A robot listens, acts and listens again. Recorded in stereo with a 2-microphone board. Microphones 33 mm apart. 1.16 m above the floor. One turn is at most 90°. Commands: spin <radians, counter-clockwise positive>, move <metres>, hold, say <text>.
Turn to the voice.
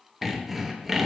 hold
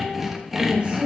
spin -0.61
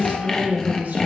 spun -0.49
spin -1.57
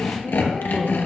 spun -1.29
spin -0.79
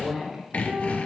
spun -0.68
say Facing the woman speaking, 2 to 4 m away.